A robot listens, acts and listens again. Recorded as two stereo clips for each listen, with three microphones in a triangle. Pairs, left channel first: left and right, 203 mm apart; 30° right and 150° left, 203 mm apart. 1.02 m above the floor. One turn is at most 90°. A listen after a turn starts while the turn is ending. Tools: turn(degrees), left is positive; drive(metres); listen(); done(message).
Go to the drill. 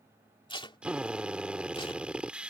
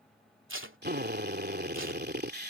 turn(degrees=-90)
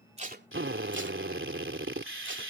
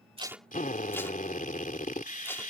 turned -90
turn(degrees=-80)
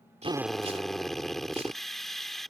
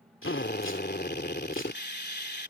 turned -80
drive(metres=1.0)
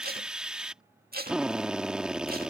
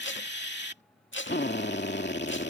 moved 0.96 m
drive(metres=1.0)
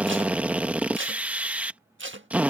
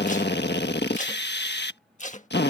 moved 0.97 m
drive(metres=1.0)
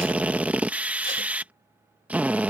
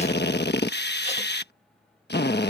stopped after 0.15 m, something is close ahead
turn(degrees=-10)
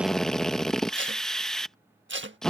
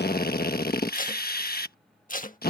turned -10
done("Arrived at the drill, straight ahead.")